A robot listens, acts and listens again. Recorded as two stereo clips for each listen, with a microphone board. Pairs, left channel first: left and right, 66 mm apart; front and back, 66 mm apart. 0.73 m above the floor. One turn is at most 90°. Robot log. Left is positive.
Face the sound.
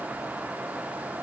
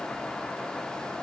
cmd idle
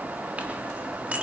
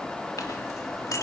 note: The clink: 25° right.
cmd yaw -25
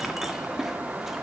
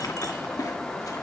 end: Facing the clink.